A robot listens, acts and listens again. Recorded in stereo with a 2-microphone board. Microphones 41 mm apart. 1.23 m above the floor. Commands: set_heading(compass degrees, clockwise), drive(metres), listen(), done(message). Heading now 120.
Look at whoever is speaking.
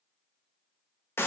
listen()
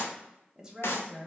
set_heading(135)
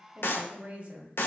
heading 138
set_heading(283)
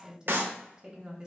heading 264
set_heading(284)
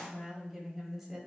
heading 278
done("Found it: a woman speaking, straight ahead, 1 to 2 m away.")